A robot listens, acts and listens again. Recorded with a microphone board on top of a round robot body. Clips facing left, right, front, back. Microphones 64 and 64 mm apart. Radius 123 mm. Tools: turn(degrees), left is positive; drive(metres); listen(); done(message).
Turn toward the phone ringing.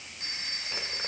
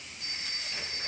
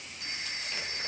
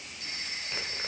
turn(degrees=65)
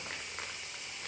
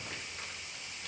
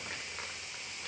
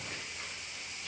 listen()
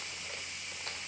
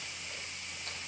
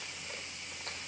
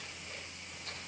listen()
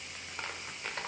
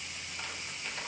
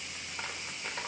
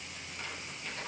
done("I heard a phone ringing from this way, but can't make it out now.")